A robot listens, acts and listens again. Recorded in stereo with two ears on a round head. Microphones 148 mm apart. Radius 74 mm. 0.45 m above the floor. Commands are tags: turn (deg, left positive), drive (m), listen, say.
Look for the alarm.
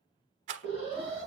<turn deg="65"/>
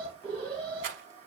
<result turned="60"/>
<turn deg="15"/>
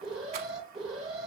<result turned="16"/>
<say>Facing the alarm.</say>